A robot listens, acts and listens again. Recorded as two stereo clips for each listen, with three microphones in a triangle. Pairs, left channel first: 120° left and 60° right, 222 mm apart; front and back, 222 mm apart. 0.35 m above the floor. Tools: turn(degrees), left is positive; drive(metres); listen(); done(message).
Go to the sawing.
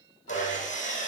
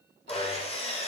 turn(degrees=65)
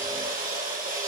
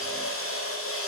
turn(degrees=-10)
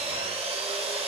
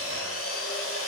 drive(metres=1.0)
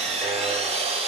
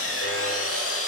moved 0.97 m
drive(metres=1.0)
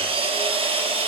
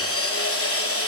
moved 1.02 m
drive(metres=1.0)
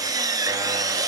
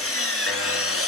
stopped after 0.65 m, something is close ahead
turn(degrees=15)
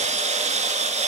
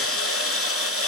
done("Arrived at the sawing, straight ahead.")